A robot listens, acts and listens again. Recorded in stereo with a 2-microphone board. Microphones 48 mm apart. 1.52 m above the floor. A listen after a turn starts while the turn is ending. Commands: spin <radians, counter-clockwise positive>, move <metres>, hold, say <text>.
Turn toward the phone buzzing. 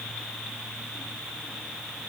hold
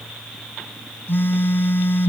spin 0.87
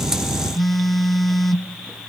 say Facing the phone buzzing.